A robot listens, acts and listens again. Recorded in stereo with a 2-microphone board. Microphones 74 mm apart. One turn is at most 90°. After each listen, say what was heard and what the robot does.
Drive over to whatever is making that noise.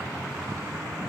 Keep listening.
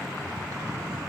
Keep listening.
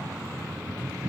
I can't make out anything.